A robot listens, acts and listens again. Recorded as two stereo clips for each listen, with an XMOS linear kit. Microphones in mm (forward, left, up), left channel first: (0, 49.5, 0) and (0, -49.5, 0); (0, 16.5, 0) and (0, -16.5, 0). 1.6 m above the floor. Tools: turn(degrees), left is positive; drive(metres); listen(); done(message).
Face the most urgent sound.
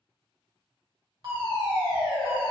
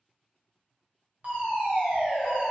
turn(degrees=-45)
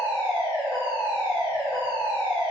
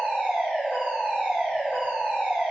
turn(degrees=-85)
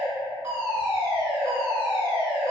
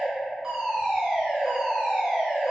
turn(degrees=-25)
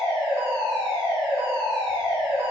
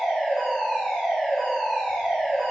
done("Facing the fire alarm, 1 to 2 m away.")